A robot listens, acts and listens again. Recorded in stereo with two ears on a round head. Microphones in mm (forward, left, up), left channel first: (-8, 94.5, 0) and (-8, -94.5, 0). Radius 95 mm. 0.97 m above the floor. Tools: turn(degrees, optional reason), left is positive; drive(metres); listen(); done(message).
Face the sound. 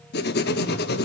turn(degrees=50, reason="The writing: about 50° left or 130° left.")
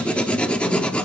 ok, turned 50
done("Facing the writing.")